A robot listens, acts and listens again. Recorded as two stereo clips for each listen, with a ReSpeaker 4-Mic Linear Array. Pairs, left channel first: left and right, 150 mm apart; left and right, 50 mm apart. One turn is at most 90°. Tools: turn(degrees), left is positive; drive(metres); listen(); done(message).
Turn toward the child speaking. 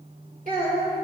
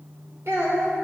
turn(degrees=-60)
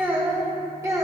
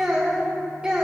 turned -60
turn(degrees=-20)
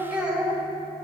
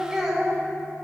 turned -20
turn(degrees=-10)
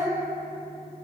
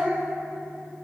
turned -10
done("Facing the child speaking, 2 to 4 m away.")